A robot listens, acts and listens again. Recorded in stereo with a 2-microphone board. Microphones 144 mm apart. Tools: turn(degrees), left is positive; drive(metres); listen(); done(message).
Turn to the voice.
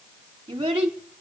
turn(degrees=-35)
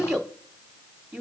done("Facing the child speaking.")